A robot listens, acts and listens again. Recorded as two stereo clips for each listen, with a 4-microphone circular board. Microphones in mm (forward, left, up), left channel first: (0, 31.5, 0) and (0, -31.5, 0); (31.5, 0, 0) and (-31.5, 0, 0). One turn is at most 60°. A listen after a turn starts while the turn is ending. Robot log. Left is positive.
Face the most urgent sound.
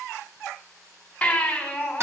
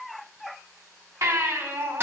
note: The baby crying: 160° left.
cmd yaw +60
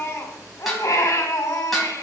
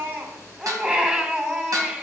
note: The baby crying is now 110° left.
cmd yaw +60
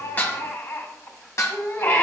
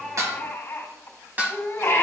note: The baby crying is now 50° left.
cmd yaw +50
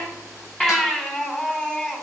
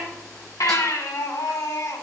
note: The baby crying is now 15° left.
cmd yaw +15
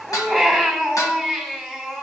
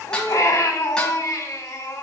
end: Found it: a baby crying, straight ahead.